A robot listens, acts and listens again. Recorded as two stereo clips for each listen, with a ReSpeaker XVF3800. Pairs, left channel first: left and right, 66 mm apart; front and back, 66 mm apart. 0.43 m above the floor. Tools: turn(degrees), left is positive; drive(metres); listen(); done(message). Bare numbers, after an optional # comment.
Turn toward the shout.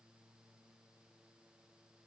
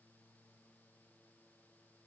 listen()
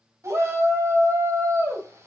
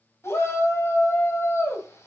# The shout: 45° right.
turn(-45)
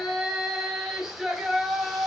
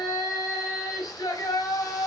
done("Found it: a shout, straight ahead, 2 to 4 m away.")